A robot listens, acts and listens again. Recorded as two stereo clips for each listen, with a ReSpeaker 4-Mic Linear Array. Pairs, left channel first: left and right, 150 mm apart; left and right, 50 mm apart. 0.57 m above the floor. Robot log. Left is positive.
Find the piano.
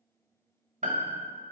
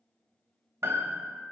note: The piano: about 55° right or 125° right.
cmd yaw -55
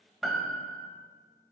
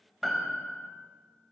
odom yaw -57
end: Facing the piano.